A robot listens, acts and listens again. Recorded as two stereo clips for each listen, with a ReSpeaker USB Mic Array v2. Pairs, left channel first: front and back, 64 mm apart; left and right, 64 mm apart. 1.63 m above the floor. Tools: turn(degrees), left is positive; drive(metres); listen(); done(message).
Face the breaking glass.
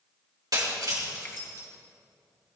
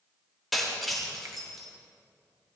turn(degrees=180)
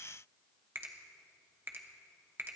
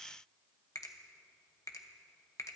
done("Facing where the breaking glass came from. I can't hear it now.")